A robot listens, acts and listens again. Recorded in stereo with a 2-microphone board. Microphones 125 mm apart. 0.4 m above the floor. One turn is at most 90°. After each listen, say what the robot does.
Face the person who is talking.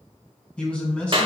Turn 30° left.
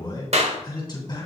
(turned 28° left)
Turn 90° left.
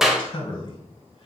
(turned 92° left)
Turn 50° left.
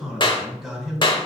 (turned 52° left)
Facing the man speaking.